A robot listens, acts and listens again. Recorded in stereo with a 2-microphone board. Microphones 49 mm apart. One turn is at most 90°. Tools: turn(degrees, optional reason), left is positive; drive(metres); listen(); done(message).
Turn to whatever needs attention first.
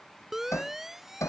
turn(degrees=-30)
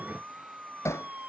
turn(degrees=-90, reason="So it is at 145° right.")
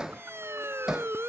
turn(degrees=-60, reason="The siren is now 60° right.")
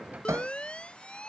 turn(degrees=20, reason="The siren is now 20° left.")
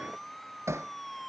done("Facing the siren.")